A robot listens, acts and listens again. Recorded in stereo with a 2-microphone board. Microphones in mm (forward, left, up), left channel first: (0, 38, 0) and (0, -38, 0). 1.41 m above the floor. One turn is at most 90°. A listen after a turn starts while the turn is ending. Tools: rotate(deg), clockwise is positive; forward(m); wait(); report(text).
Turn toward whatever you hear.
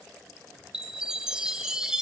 rotate(30)
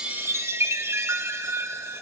rotate(90)
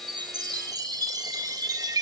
rotate(60)
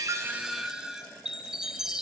rotate(10)
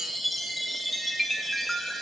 report("Found it: a chime, straight ahead, 1 to 2 m away.")